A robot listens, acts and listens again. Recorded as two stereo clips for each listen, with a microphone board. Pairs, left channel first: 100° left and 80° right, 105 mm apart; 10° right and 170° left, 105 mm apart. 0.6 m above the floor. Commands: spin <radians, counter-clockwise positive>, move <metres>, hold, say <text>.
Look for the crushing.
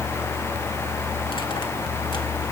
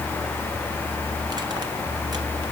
hold
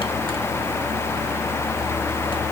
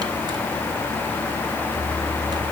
hold
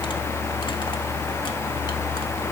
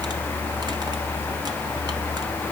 say I can't make out crushing to turn to.